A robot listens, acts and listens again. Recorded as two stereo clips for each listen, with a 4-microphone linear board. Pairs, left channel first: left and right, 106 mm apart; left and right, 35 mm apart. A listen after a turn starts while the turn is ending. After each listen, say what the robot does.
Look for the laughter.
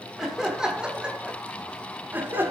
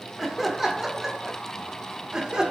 Turn 20° right.
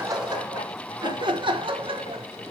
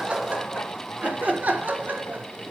Turn 120° right.
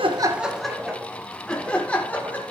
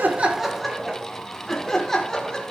Turn 15° left.
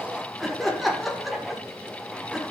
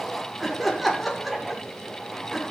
Found it: laughter, straight ahead.